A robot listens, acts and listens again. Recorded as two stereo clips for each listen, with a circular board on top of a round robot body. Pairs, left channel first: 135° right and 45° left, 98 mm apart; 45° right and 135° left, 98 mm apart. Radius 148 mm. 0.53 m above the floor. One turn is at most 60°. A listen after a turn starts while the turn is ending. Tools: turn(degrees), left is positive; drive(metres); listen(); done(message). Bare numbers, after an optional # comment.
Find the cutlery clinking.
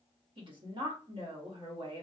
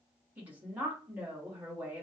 listen()
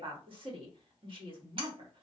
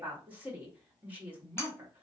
# The cutlery clinking: 20° left.
turn(20)
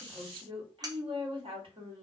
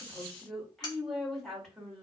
done("Found it: cutlery clinking, straight ahead.")